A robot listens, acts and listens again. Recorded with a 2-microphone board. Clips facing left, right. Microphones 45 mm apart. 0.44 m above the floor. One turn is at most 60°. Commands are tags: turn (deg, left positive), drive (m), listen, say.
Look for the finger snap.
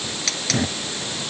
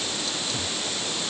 <listen/>
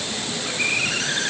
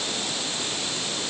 <listen/>
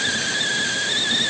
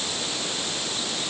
<say>I can't make out a finger snap to turn to.</say>